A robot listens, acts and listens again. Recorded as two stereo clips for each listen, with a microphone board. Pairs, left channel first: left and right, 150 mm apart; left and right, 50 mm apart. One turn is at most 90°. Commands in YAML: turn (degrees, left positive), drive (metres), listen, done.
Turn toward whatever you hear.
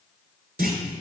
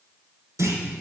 turn: -90
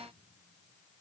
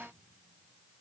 done: "Facing where the clunk came from. I can't hear it now."